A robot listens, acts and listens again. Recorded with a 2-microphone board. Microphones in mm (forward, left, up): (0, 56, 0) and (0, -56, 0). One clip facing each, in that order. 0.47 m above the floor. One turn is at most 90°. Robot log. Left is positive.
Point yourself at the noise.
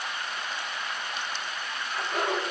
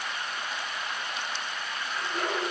note: The laughter: about 60° left or 120° left.
cmd yaw +60
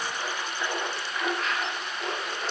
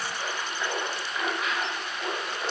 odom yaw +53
note: So it is at 10° right.
cmd yaw -10
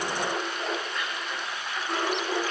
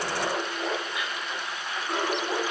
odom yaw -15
note: The laughter is now 10° right.
cmd yaw -10
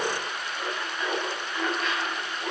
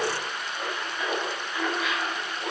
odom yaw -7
end: Found it: laughter, straight ahead, 2 to 4 m away.